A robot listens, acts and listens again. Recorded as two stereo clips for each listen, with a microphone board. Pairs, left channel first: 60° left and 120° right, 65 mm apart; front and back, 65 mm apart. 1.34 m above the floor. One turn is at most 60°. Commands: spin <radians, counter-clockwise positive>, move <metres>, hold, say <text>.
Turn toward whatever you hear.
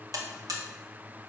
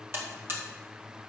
spin -1.05
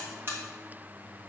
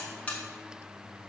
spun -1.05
spin -1.05
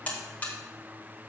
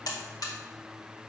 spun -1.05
say Facing the buzzer.